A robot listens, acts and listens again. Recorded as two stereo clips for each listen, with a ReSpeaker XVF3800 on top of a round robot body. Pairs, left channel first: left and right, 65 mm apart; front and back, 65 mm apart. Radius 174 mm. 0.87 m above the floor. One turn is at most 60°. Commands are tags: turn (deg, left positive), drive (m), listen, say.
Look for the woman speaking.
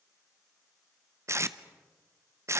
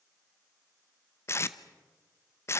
<listen/>
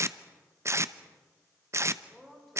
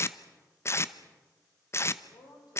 <say>Found it: a woman speaking, straight ahead.</say>